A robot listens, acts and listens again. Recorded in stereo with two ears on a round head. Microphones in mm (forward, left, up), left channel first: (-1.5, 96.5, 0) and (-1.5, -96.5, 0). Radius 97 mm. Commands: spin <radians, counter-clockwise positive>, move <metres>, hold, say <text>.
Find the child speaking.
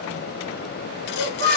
spin -1.22
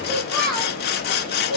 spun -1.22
say Facing the child speaking.